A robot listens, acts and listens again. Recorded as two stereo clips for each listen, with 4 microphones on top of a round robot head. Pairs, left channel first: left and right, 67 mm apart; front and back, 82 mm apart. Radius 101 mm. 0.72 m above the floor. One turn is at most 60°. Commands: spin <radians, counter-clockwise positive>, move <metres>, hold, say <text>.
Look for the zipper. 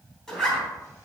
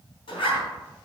spin 0.17
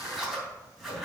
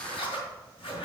say Facing the zipper, 2 to 4 m away.